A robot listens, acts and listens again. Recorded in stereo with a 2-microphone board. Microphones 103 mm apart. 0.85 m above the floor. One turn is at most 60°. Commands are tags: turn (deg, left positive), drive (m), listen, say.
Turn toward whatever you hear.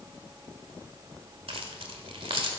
<turn deg="-60"/>
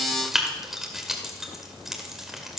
<say>Found it: keys jangling, straight ahead.</say>